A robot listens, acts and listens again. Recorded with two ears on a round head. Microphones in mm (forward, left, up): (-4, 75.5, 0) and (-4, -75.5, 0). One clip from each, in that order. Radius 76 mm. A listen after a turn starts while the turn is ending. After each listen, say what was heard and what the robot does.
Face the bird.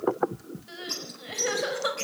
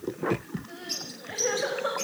Turn 30° left.
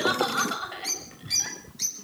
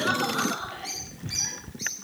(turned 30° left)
So it is at 135° left. Turn 135° left.
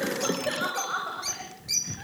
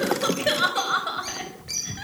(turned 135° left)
The bird is now 25° left. Turn 25° left.
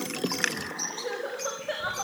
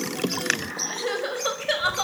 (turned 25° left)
Found it: a bird, straight ahead.